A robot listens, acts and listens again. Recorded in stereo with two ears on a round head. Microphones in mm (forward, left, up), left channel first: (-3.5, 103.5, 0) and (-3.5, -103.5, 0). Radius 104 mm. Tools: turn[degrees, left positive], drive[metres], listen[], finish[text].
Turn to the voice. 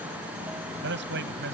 Thought: The man speaking: about 50° right or 130° right.
Action: turn[-50]
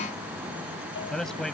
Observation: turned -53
Action: finish[Found it: a man speaking, straight ahead.]